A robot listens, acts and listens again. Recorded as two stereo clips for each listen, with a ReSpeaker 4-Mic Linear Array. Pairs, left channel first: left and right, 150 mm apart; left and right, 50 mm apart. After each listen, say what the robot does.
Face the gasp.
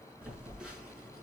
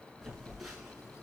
Keep listening.
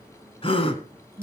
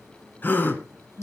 Turn 40° left.
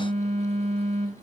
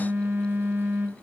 Keep listening.
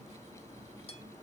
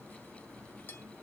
I heard a gasp, but can't make it out now. It was about straight ahead or 100° left.